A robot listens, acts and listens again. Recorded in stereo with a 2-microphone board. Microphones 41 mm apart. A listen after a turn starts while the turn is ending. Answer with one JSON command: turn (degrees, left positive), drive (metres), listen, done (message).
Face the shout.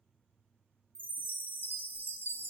{"listen": true}
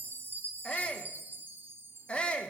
{"turn": 30}
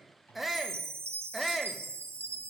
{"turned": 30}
{"done": "Found it: a shout, straight ahead, 1 to 2 m away."}